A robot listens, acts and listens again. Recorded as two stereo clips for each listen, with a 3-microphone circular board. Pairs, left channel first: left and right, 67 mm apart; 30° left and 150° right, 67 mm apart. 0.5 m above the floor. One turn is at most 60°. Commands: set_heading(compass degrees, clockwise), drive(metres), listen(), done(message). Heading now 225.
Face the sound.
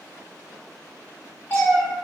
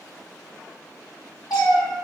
set_heading(180)
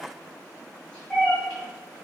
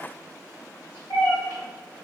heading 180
set_heading(160)
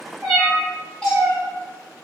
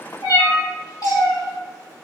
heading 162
set_heading(147)
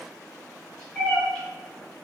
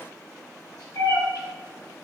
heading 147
done("Found it: a cat meowing, straight ahead.")